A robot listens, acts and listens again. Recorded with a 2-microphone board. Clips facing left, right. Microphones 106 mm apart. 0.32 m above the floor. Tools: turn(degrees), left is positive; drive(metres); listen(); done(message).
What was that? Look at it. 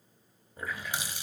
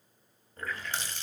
turn(degrees=30)
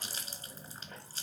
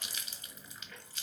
turn(degrees=140)
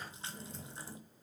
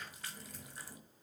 turn(degrees=35)
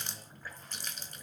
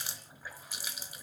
turn(degrees=-10)
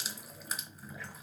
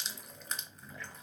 done("Facing the running tap.")